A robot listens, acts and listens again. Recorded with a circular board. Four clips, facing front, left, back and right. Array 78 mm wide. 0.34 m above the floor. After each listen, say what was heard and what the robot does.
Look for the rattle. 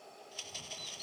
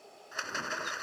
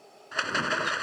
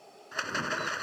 The rattle: 165° right. Turn 165° right.
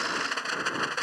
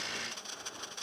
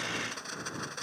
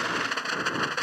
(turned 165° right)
The rattle is now 55° right. Turn 55° right.
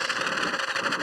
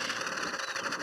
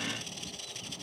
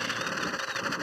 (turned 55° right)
Facing the rattle.